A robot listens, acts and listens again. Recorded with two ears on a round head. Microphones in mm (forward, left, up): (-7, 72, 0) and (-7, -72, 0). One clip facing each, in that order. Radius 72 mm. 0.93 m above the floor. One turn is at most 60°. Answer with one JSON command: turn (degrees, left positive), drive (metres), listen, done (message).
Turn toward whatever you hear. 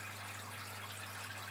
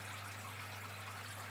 {"listen": true}
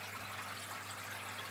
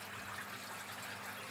{"listen": true}
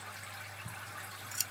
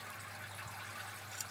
{"turn": 60}
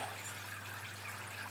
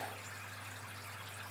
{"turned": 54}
{"turn": 35}
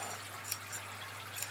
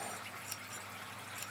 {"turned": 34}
{"turn": 10}
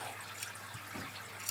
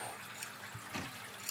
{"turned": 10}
{"done": "Found it: scissors, straight ahead."}